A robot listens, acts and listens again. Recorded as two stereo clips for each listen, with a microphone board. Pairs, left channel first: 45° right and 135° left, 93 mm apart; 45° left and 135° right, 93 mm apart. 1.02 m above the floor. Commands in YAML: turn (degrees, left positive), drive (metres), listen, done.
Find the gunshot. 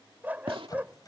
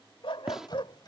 turn: 140
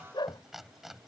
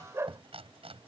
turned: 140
done: "I heard a gunshot from this way, but can't make it out now."